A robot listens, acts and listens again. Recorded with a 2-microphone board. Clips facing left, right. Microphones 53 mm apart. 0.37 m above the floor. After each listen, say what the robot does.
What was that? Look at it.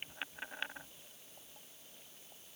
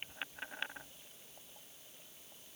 Keep listening.
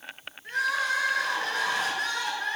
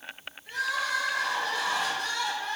Turn 55° left.
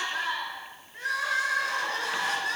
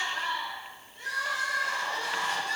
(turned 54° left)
Turn 70° left.
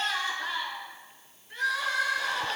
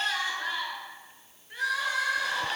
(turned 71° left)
Facing the crying.